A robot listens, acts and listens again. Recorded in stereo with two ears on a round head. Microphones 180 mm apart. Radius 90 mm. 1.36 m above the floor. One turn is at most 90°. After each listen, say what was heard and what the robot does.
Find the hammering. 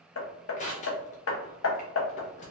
The hammering: about 75° left or 105° left. Turn 75° left.
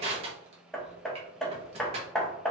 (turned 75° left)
Found it: hammering, straight ahead, under 1 m away.